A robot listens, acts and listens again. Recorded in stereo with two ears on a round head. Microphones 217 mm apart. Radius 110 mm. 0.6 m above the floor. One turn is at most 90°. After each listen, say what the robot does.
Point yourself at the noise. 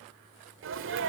Turn 55° right.
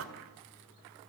Turn 65° right.
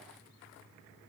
I heard a sneeze from this way, but can't make it out now.